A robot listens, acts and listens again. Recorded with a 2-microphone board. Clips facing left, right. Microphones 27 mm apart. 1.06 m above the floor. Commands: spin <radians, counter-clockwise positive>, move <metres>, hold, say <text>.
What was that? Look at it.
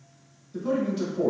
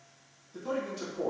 spin 0.52
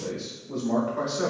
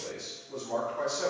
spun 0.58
spin 2.44
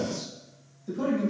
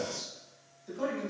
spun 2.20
spin 0.17
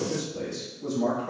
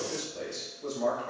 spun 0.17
say Found it: a man speaking, straight ahead.